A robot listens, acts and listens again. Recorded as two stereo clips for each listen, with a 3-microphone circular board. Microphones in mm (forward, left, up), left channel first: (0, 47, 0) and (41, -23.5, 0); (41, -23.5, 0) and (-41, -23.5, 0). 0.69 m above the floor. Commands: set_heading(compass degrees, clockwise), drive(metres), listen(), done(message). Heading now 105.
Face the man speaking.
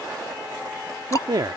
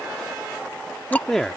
set_heading(190)
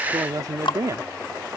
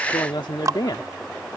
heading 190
set_heading(210)
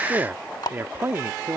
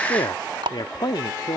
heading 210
done("Found it: a man speaking, straight ahead.")